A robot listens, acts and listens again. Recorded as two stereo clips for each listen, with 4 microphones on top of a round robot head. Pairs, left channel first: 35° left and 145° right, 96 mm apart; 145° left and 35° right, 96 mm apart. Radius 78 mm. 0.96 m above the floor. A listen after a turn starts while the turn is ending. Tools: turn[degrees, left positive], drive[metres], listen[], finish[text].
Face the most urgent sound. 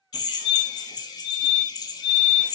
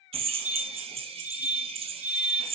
Thought: The fire alarm: 35° left.
Action: turn[35]
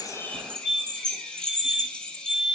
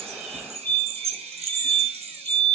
Action: finish[Found it: a fire alarm, straight ahead.]